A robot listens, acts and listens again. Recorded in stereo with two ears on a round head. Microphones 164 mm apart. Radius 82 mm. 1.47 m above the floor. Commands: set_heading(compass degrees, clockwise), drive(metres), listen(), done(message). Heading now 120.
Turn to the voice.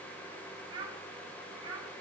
set_heading(145)
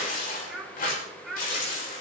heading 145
done("Facing the child speaking.")